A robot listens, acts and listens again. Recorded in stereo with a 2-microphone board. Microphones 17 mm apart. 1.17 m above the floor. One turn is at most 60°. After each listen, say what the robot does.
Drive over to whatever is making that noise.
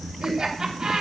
Turn 45° right.
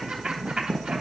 Turn 60° right.
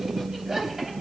Turn 30° right.
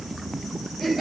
Turn 10° right.
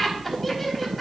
Drive 1.0 m forward.
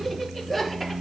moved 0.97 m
Drive 1.0 m forward.
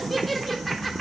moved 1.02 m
Drive 1.0 m forward.
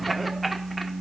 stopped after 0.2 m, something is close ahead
Arrived at the laughter, straight ahead.